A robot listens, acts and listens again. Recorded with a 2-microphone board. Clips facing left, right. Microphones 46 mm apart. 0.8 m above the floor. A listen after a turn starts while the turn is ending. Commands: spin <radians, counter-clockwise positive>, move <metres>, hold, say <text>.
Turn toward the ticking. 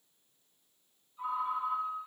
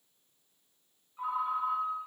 hold
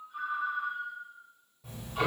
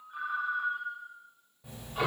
spin -0.52
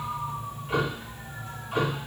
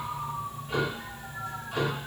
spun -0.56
spin 0.52
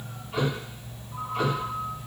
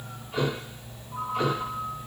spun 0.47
say Found it: ticking, straight ahead.